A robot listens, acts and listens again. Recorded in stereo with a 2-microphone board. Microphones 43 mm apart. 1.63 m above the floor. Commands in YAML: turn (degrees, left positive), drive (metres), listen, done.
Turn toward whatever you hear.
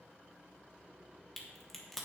turn: 30
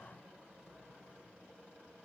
listen: true
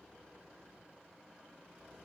done: "I heard a crack, but can't make it out now. It was about 25° right or 145° left."